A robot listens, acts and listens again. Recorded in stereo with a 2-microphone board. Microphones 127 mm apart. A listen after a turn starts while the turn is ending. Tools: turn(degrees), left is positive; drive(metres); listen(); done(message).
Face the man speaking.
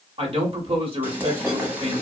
turn(degrees=-50)
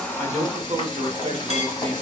turn(degrees=-60)
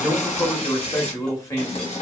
turn(degrees=25)
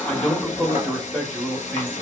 turn(degrees=10)
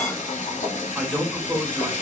done("Facing the man speaking, 1 to 2 m away.")